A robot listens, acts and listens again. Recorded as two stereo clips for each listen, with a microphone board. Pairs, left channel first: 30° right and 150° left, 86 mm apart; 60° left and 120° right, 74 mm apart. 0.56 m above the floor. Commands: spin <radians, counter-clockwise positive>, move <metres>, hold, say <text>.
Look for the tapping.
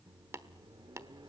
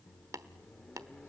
spin -2.79
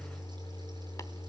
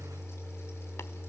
hold
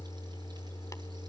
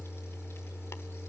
hold
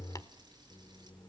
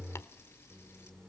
say Facing where the tapping came from. I can't hear it now.